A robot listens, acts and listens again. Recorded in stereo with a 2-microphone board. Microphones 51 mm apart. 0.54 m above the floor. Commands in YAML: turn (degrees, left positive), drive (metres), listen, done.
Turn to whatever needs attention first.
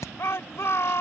turn: 55
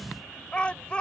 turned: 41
turn: 25
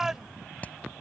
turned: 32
turn: -10
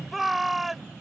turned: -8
done: "Facing the shout."